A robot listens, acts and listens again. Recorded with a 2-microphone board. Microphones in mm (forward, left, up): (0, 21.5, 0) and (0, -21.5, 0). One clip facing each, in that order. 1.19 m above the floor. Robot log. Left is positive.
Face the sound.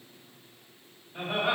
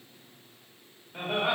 note: The laughter: about 45° right or 135° right.
cmd yaw -45
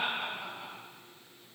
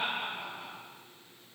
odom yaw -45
note: So it is at 10° right.
cmd yaw -10
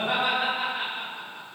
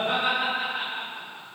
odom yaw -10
note: The laughter is now 20° right.
cmd yaw -20
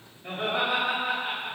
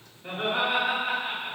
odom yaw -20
note: The laughter is now 25° right.
cmd yaw -25
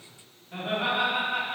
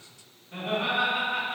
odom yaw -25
note: The laughter is now 15° left.
cmd yaw +15
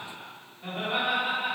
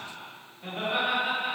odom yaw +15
end: Facing the laughter.